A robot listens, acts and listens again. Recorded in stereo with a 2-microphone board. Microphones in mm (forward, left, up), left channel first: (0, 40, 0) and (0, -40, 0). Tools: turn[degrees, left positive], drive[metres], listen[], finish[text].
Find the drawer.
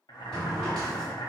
Action: turn[30]
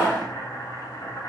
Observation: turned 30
Thought: So it is at 150° left.
Action: turn[150]
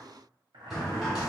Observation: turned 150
Action: finish[Found it: a drawer, straight ahead, 1 to 2 m away.]